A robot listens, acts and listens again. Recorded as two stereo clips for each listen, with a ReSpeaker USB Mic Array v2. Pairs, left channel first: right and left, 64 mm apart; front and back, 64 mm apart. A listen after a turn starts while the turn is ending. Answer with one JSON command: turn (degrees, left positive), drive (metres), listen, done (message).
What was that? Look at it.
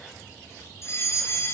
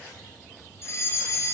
{"turn": -45}
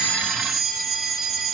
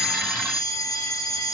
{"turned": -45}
{"done": "Found it: a fire alarm, straight ahead, over 4 m away."}